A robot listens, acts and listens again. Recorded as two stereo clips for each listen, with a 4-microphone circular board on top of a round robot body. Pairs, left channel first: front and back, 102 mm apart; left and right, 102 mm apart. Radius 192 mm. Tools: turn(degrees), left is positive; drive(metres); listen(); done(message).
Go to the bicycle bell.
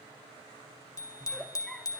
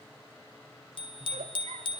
turn(degrees=55)
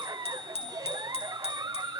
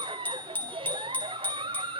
turn(degrees=15)
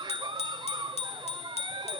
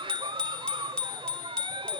turn(degrees=10)
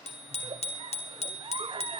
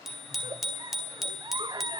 drive(metres=1.0)
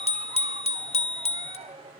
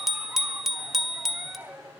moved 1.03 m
drive(metres=1.0)
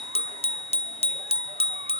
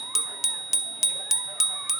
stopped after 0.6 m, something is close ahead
done("Arrived at the bicycle bell, straight ahead.")